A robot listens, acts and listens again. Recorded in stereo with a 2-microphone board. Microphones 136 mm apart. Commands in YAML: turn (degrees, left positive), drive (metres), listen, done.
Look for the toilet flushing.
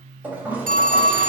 turn: -30
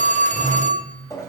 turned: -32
turn: 20
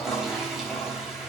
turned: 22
done: "Facing the toilet flushing."